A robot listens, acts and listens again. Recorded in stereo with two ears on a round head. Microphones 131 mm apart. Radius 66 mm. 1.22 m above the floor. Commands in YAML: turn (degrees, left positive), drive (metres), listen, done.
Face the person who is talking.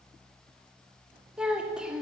turn: -30
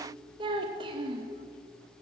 turn: -145
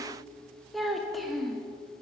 done: "Facing the child speaking."